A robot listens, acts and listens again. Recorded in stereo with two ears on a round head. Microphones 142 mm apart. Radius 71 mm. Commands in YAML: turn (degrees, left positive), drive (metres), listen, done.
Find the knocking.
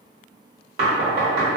turn: -65
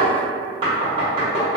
turn: -35
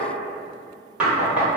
done: "Found it: knocking, straight ahead."